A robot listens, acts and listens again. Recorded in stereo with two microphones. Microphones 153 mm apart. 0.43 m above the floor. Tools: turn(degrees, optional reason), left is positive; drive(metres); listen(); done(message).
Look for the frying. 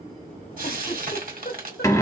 turn(degrees=-65, reason="The frying: about 65° right or 115° right.")
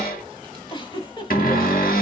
listen()
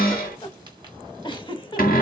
listen()
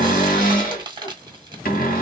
turn(degrees=-35, reason="So it is at 35° right.")
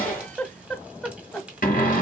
listen()
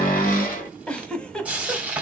turn(degrees=-10, reason="The frying is now 10° right.")
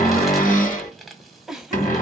done("Found it: frying, straight ahead, 1 to 2 m away.")